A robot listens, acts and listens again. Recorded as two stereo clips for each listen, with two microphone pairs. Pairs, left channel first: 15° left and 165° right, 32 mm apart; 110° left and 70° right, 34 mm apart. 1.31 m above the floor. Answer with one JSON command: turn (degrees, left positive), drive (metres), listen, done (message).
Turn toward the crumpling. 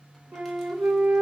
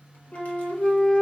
{"listen": true}
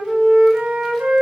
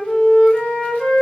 {"listen": true}
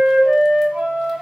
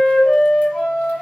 {"done": "I can't make out crumpling to turn to."}